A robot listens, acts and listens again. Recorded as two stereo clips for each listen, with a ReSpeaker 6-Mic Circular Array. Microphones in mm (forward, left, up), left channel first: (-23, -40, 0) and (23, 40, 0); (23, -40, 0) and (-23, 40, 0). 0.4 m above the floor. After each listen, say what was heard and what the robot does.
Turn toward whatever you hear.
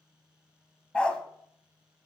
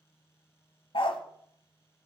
The dog barking: 40° right. Turn 40° right.
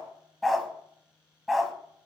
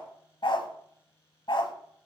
The dog barking is now 30° right. Turn 30° right.
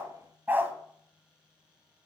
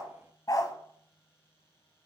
The dog barking is now 10° right. Turn 10° right.
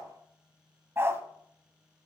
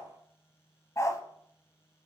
Facing the dog barking, under 1 m away.